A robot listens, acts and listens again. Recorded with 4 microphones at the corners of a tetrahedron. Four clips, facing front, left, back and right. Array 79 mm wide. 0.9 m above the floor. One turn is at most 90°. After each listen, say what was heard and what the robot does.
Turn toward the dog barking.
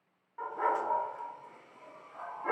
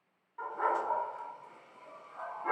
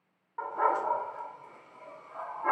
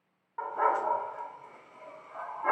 The dog barking: 120° right. Turn 90° right.
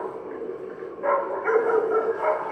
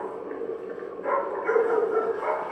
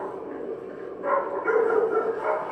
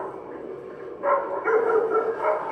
The dog barking is now 45° right. Turn 45° right.
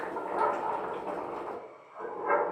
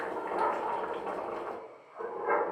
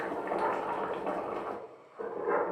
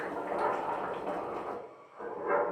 The dog barking is now 30° left. Turn 30° left.
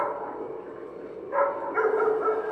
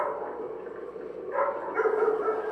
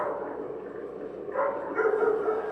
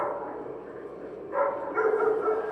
Found it: a dog barking, straight ahead.